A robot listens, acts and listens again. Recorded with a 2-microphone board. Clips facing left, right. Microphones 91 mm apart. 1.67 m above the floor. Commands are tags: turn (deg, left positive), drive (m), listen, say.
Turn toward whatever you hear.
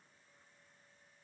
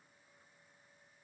<listen/>
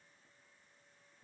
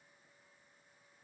<listen/>
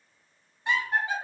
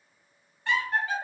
<turn deg="20"/>
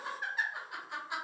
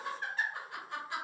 <turn deg="15"/>
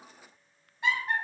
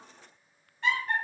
<turn deg="20"/>
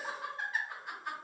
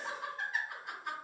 <turn deg="30"/>
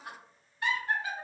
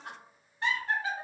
<turn deg="-30"/>
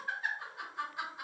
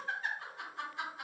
<turn deg="10"/>
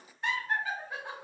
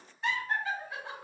<say>Found it: laughter, straight ahead.</say>